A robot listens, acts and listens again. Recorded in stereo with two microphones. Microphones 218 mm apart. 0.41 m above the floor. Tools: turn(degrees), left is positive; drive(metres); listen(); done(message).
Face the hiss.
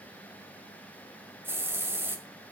turn(degrees=-30)
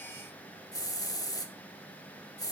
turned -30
turn(degrees=20)
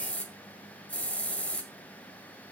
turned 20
done("Facing the hiss, 1 to 2 m away.")